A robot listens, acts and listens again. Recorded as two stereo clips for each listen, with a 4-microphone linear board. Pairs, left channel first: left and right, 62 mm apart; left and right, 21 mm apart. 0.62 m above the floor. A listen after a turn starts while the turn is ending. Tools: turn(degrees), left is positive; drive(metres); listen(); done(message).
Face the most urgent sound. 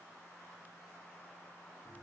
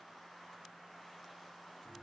listen()
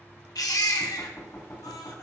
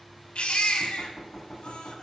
turn(degrees=90)
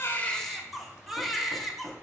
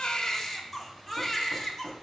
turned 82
done("Facing the baby crying.")